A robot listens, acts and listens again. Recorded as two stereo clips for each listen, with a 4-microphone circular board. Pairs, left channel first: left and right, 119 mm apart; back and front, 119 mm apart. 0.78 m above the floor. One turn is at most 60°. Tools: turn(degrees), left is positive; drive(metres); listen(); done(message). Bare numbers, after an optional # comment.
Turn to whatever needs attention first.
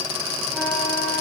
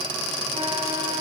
listen()
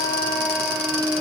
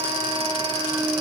listen()
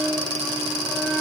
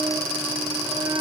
done("I can't make out anything urgent to turn to.")